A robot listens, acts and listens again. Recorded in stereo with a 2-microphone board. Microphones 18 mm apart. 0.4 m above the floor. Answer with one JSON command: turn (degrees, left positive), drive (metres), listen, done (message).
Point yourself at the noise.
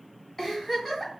{"turn": 30}
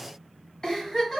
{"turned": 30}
{"turn": 140}
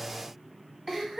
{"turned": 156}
{"turn": -20}
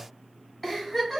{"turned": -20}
{"done": "Facing the giggle, 1 to 2 m away."}